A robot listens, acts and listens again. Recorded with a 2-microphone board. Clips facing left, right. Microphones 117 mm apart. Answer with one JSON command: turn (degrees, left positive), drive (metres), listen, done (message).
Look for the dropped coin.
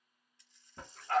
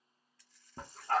{"turn": 20}
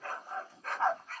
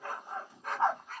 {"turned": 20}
{"listen": true}
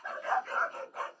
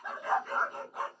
{"done": "I heard a dropped coin, but can't make it out now. It was about straight ahead or 140° left."}